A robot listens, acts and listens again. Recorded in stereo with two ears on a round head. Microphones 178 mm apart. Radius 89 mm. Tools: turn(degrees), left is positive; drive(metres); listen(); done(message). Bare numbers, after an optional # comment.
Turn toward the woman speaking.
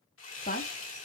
# The woman speaking: about 45° left or 135° left.
turn(45)
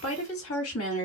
# So it is at 100° left.
turn(100)
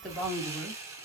done("Found it: a woman speaking, straight ahead.")